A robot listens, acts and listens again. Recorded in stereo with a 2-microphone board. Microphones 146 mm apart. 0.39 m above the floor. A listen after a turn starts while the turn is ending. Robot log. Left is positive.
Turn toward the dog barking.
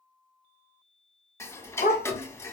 cmd yaw +90
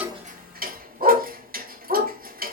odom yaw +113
note: So it is at 75° right.
cmd yaw -75
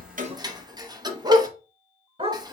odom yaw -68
note: The dog barking is now 40° right.
cmd yaw -40
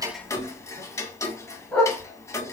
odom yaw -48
note: The dog barking is now 10° left.
cmd yaw +10
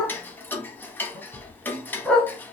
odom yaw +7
end: Facing the dog barking.